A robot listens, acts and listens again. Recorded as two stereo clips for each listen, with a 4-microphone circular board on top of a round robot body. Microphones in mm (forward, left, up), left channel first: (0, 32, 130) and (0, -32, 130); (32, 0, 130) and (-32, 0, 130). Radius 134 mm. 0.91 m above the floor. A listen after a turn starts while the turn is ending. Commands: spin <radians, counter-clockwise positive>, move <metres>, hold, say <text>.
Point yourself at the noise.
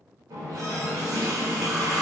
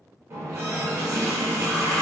spin -2.27
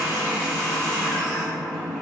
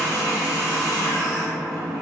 spin 0.17
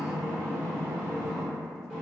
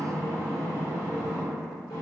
say Found it: a running tap, straight ahead, under 1 m away.